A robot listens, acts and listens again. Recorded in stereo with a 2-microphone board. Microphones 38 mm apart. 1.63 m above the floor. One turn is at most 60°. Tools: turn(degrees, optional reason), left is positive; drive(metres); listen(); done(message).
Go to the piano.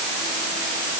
listen()
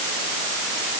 listen()
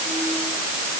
done("I can't make out a piano.")